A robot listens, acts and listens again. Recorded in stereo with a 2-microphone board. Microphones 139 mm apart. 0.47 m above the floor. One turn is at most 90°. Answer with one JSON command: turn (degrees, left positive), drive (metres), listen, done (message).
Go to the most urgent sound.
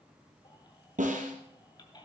{"turn": 35}
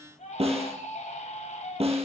{"turn": 90}
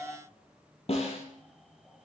{"drive": 1.0}
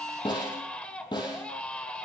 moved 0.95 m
{"turn": 10}
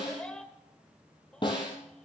{"turn": 10}
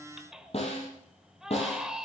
{"drive": 1.0}
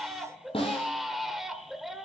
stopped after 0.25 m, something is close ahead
{"done": "I am next to the baby crying."}